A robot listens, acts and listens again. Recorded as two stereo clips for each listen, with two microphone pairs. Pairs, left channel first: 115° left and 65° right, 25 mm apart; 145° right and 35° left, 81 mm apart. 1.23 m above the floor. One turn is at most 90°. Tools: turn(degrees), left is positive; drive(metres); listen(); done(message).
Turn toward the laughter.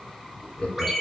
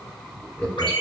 turn(degrees=90)
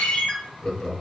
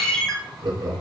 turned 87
turn(degrees=55)
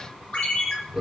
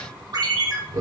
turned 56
done("Found it: laughter, straight ahead, under 1 m away.")